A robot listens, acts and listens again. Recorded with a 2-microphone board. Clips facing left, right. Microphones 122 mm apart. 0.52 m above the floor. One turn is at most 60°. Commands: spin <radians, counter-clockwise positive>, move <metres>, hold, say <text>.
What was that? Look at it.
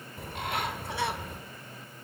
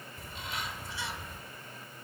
spin 1.05
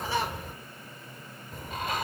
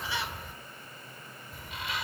spin 0.87
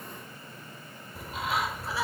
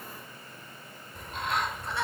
say Facing the bird.